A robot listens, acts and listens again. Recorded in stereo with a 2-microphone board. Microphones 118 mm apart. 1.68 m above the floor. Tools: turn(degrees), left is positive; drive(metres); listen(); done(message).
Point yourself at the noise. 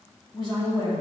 turn(degrees=45)
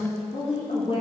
turn(degrees=65)
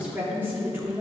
turn(degrees=-20)
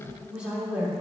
turn(degrees=-10)
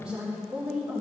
turn(degrees=-10)
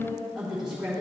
done("Found it: a woman speaking, straight ahead, 2 to 4 m away.")